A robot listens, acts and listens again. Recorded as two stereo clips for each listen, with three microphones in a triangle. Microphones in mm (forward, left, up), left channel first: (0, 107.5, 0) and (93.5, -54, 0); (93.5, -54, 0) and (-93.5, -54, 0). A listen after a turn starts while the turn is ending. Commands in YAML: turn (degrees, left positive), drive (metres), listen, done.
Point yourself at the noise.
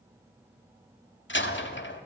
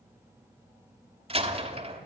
turn: 125
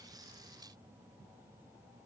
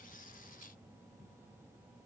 done: "Facing where the door slam came from. I can't hear it now."